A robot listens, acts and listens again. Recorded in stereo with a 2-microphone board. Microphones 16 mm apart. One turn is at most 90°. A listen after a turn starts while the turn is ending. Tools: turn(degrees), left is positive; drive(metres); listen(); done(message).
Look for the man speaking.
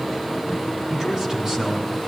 turn(degrees=-35)
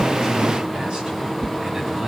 turn(degrees=-90)
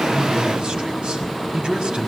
turn(degrees=-60)
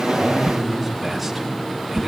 done("Facing the man speaking.")